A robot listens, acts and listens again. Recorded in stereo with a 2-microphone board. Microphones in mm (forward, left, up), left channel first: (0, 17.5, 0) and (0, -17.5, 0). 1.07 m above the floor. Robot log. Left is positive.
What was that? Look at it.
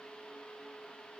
cmd idle
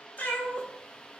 note: The cat meowing: about 60° left or 120° left.
cmd yaw +60
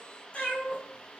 note: So it is at 45° left.
cmd yaw +45
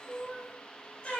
note: The cat meowing is now 40° left.
cmd yaw +40
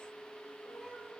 note: The cat meowing is now 15° left.
cmd yaw +15
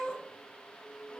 end: Found it: a cat meowing, straight ahead.